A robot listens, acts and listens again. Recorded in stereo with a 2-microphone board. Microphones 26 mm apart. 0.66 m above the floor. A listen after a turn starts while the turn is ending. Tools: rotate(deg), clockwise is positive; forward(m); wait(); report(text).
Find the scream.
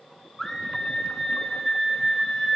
rotate(-30)
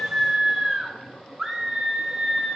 rotate(20)
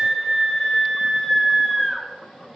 report("Facing the scream.")